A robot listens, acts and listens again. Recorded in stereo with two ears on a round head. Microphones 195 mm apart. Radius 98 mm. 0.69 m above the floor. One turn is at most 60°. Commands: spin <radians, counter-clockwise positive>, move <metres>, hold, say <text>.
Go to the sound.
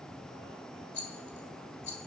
spin 0.61
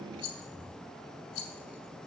spin 1.05
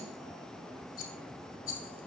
spin 0.70
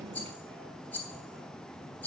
spin 0.17
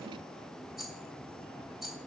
move 1.0
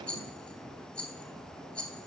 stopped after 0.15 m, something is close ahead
say Something is in my way. I am facing the rattle but have not reached it.